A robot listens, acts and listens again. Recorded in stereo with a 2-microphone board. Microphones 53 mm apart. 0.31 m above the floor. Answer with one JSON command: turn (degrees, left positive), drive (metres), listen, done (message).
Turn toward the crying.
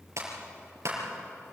{"listen": true}
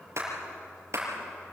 {"listen": true}
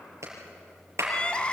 {"turn": 20}
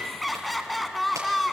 {"done": "Facing the crying."}